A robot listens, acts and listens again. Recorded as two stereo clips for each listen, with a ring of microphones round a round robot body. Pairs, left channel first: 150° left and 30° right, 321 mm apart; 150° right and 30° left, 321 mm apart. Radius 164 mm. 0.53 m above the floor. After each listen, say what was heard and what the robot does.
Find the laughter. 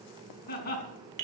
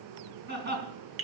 The laughter: 90° left. Turn 90° left.
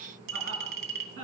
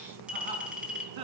The laughter is now 20° left. Turn 20° left.
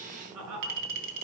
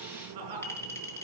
The laughter is now 10° left. Turn 10° left.
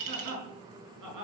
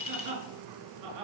Found it: laughter, straight ahead, over 4 m away.